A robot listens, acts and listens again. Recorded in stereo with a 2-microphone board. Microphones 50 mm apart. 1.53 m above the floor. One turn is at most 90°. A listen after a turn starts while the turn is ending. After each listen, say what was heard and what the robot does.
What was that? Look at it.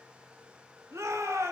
Turn 90° right.
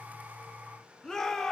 So it is at 10° left. Turn 10° left.
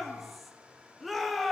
Found it: a shout, straight ahead, 1 to 2 m away.